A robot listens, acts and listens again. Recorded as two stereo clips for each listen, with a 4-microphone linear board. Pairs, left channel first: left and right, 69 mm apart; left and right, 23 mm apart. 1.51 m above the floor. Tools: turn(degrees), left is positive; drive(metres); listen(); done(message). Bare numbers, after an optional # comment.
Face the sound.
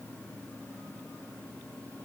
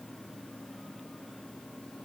listen()
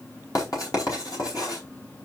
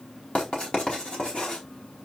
# The writing: about 60° left or 120° left.
turn(60)
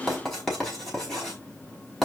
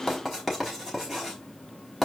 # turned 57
done("Facing the writing.")